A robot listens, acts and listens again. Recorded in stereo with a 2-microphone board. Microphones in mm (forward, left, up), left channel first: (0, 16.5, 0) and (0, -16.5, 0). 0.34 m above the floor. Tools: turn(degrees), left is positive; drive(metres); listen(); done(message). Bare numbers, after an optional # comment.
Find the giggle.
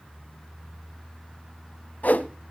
listen()
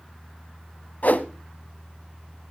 listen()
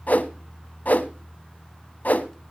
done("I can't make out a giggle, only a whoosh.")